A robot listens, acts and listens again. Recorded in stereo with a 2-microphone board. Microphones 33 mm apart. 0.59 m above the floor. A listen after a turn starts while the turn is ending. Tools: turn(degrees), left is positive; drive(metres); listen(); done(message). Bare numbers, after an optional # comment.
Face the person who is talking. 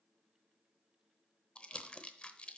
listen()
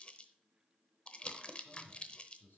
# The man speaking: about 75° left or 105° left.
turn(75)
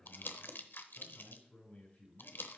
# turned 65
# So it is at 40° left.
turn(40)
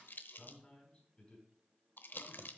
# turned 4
# The man speaking is now 30° left.
turn(30)
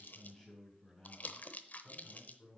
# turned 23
done("Facing the man speaking.")